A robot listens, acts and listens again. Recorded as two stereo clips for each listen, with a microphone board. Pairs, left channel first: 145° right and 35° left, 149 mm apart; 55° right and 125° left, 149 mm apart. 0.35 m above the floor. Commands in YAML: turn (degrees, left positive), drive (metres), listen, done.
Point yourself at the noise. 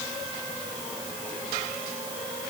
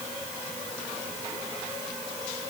listen: true
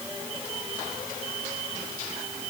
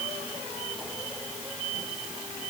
listen: true
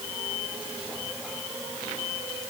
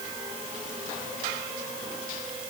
done: "I can't make out anything."